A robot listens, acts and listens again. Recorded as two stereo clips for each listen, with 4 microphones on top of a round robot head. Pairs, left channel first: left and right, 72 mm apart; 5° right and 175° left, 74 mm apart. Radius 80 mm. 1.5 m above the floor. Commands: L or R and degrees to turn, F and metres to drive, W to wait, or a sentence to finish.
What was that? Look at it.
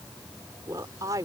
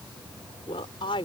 R35
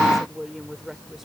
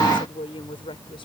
Facing the woman speaking.